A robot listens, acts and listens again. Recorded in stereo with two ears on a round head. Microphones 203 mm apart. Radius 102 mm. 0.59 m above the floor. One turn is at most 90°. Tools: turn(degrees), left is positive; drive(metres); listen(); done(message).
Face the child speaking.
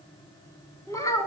turn(degrees=30)
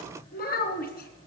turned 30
turn(degrees=90)
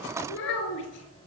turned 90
turn(degrees=55)
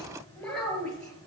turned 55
done("Found it: a child speaking, straight ahead, over 4 m away.")